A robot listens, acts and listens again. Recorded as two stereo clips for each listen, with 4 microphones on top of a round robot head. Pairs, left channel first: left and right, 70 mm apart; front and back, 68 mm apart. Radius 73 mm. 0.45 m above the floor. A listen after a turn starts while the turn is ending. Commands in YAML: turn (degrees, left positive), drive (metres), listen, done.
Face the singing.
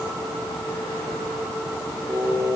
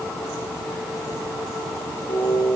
turn: -45
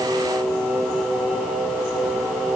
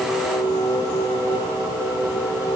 done: "Facing the singing, over 4 m away."